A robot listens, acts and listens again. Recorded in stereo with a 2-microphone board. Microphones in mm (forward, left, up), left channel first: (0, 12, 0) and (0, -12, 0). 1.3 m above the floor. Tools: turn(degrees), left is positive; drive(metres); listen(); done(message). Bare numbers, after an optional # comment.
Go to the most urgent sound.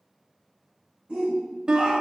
# The shout: about 55° right or 125° right.
turn(-55)
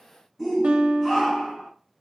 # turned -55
drive(1.0)
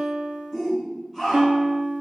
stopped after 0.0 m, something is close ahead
done("Blocked. The shout is further on, straight ahead.")